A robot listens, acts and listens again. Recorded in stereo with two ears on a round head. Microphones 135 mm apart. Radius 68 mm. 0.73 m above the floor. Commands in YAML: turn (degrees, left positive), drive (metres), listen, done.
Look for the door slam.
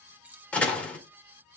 turn: 30
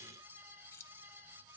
listen: true
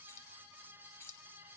done: "I heard a door slam, but can't make it out now. It was about 20° right or 140° left."